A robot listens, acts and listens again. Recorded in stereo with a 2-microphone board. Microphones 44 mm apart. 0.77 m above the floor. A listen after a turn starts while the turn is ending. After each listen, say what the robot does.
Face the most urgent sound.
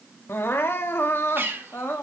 Turn 60° left.
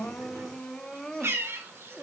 Turn 15° left.
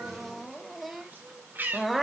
Facing the crying, 1 to 2 m away.